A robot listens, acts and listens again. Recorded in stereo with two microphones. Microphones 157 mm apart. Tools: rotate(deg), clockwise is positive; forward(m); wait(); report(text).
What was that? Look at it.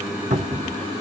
rotate(60)
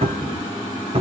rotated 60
rotate(50)
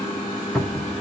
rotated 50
report("Found it: a cupboard door, straight ahead, 1 to 2 m away.")